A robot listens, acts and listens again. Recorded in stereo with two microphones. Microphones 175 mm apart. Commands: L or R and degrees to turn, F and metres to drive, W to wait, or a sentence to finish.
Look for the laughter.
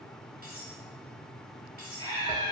L20
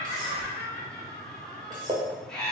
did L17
Found it: laughter, straight ahead, 1 to 2 m away.